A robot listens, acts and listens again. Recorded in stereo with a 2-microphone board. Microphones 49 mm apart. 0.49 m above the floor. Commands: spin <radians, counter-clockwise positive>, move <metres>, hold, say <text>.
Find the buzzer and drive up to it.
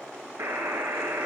spin -1.57
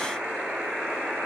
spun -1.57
spin -0.26
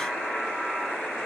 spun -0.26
move 1.0
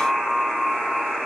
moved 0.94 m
move 1.0
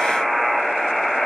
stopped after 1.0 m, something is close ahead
say Arrived at the buzzer, straight ahead.